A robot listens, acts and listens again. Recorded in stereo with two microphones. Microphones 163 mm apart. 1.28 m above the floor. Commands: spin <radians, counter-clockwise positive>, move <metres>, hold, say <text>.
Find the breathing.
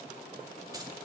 hold
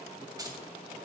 hold
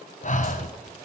spin 0.87
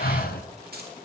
spin 1.31
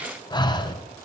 spin 0.52
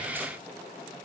hold
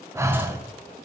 spin -0.35
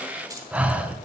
spin -0.17
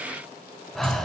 say Found it: breathing, straight ahead, under 1 m away.